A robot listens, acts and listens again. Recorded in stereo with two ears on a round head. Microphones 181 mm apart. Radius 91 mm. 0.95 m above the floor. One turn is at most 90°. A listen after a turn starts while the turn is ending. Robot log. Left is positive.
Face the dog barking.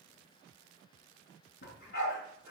note: The dog barking: about 55° left or 125° left.
cmd yaw +55
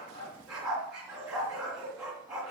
end: Found it: a dog barking, straight ahead, 2 to 4 m away.